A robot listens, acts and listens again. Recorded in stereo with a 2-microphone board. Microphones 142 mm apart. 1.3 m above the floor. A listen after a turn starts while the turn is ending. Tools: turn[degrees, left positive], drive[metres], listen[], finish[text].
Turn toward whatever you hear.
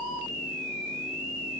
Action: listen[]
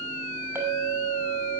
Thought: The clink: about 15° right or 165° right.
Action: turn[-15]
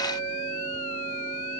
Action: listen[]
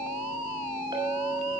Thought: So it is at 150° right.
Action: turn[-150]
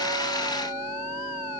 Action: listen[]
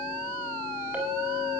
Thought: The clink is now 10° right.
Action: turn[-10]
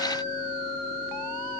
Action: listen[]
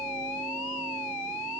Action: listen[]
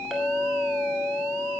Action: finish[Found it: a clink, straight ahead, over 4 m away.]